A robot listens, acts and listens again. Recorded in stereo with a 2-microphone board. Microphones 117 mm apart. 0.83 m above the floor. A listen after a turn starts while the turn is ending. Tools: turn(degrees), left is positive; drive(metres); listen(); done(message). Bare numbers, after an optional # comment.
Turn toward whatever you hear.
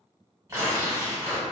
# The tearing paper: about 30° right or 150° right.
turn(-30)
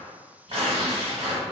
# So it is at 120° right.
turn(-120)
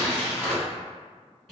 done("Facing the tearing paper.")